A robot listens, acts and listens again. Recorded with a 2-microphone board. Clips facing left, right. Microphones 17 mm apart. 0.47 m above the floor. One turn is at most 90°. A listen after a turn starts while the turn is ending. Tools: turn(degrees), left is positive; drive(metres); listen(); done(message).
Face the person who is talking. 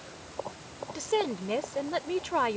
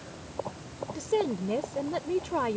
turn(degrees=25)
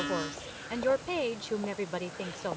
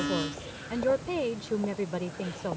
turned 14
turn(degrees=15)
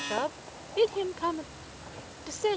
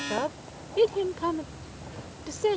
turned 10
turn(degrees=10)
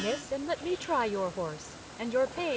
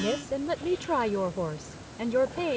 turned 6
done("Facing the woman speaking.")